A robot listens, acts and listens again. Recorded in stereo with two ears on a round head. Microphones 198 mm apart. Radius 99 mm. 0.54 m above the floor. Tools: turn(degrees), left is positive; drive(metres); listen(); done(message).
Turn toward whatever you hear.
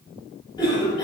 turn(degrees=20)
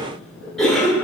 done("Facing the cough.")